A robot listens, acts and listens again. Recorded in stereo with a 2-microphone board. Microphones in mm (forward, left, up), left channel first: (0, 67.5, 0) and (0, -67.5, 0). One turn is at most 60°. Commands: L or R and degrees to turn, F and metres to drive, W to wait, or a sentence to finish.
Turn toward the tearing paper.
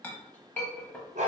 W
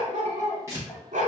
R20
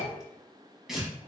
Facing the tearing paper.